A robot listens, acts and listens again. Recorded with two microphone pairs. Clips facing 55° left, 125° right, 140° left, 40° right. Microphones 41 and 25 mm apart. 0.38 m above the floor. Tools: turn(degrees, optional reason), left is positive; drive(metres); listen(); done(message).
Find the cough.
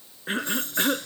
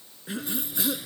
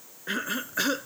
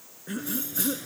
turn(degrees=95, reason="The cough: 95° left.")
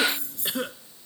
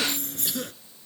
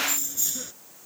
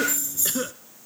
done("Found it: a cough, straight ahead.")